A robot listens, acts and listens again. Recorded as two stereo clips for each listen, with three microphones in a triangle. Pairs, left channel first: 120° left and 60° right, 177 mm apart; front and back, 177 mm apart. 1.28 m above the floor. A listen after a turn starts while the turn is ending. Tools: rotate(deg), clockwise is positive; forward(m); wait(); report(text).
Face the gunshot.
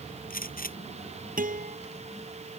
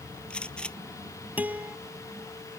rotate(-85)
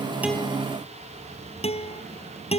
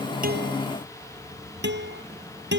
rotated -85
report("I heard a gunshot from this way, but can't make it out now.")